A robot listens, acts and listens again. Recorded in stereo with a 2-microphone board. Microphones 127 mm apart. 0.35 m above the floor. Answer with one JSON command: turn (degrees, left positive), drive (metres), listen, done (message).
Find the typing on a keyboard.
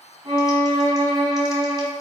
{"listen": true}
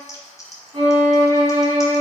{"turn": 30}
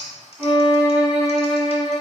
{"turn": 120}
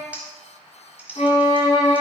{"turn": -15}
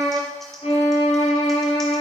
{"listen": true}
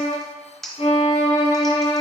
{"done": "Found it: typing on a keyboard, straight ahead."}